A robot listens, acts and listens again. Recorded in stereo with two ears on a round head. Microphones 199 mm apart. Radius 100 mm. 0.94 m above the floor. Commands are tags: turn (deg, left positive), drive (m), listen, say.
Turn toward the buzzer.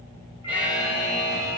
<turn deg="-30"/>
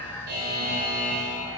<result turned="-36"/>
<turn deg="-135"/>
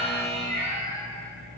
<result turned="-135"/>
<say>Facing the buzzer.</say>